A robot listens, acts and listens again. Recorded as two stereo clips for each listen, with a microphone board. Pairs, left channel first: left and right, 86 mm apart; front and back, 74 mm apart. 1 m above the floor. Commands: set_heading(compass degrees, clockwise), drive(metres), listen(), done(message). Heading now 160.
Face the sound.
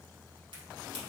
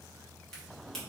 listen()
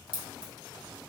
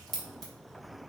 set_heading(245)
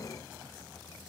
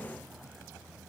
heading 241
done("I heard a crack from this way, but can't make it out now.")